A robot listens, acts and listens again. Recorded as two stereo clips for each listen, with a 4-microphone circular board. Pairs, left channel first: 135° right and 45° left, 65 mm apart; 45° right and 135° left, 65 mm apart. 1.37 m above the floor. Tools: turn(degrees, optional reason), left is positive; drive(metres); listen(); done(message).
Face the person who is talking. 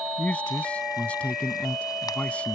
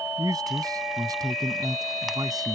turn(degrees=150, reason="The man speaking: 150° left.")
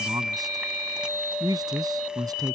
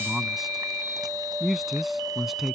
turn(degrees=45, reason="The man speaking is now 45° left.")
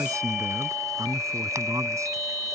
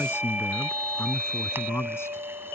done("Found it: a man speaking, straight ahead.")